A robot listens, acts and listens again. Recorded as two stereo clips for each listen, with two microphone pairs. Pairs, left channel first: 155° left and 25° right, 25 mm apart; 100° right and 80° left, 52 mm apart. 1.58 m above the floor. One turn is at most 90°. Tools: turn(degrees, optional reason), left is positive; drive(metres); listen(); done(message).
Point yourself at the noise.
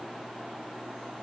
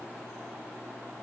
listen()
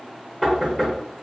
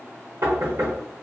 turn(degrees=65, reason="The knocking: 65° left.")
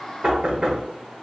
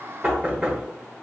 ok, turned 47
turn(degrees=20, reason="The knocking is now 20° left.")
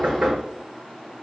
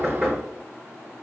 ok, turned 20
done("Facing the knocking, 1 to 2 m away.")